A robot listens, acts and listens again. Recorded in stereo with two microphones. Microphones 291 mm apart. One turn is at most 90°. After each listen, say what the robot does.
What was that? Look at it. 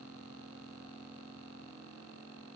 Keep listening.
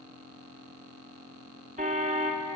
Turn 25° right.
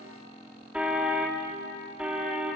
Found it: a car horn, straight ahead, 2 to 4 m away.